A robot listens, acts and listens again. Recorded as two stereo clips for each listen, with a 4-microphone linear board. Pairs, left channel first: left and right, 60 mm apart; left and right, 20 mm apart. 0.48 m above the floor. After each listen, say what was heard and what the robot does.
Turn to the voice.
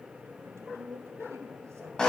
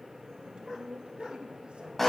The woman speaking: about 50° right or 130° right. Turn 50° right.
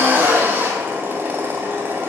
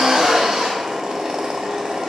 Keep listening.
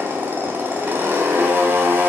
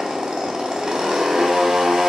Keep listening.
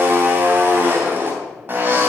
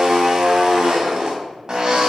I heard a woman speaking, but can't make it out now. It was about straight ahead or 80° right.